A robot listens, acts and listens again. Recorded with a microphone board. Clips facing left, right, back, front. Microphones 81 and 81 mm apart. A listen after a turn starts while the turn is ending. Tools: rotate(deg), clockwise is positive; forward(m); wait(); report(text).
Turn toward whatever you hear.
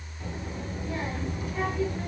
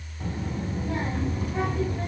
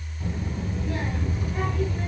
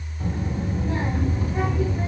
rotate(60)
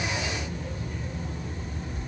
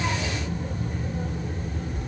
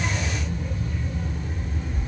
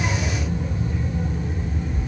rotate(85)
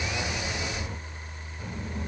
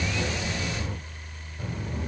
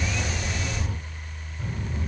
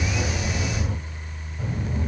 rotate(25)
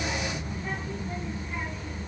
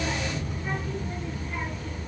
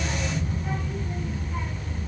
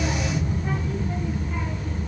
report("Facing the child speaking.")